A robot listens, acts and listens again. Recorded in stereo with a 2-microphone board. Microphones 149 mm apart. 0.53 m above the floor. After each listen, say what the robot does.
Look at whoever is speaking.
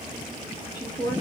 Turn 25° left.
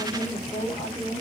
Turn 125° left.
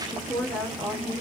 Facing the woman speaking, 1 to 2 m away.